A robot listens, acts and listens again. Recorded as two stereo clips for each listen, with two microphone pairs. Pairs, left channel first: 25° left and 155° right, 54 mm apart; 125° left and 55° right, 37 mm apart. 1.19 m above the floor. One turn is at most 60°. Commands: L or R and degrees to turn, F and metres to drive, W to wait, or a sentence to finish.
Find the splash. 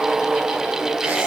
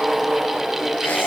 W
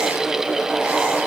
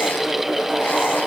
W
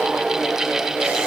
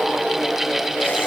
I can't make out a splash.